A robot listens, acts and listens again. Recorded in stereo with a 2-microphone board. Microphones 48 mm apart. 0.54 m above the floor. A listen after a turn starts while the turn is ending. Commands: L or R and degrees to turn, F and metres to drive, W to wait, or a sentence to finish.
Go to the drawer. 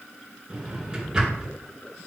R30
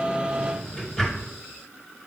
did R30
L15
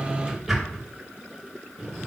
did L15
F1.0
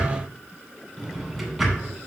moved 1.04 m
F1.0
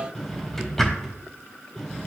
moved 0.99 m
F1.0
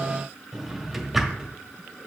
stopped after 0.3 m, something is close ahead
I am next to the drawer.